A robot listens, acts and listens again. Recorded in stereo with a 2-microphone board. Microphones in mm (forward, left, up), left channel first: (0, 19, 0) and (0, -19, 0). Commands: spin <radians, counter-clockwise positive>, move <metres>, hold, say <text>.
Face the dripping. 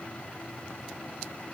hold
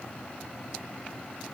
hold
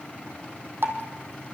spin -1.31
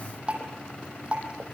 spin -0.52
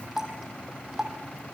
spin -0.26
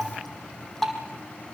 say Found it: dripping, straight ahead.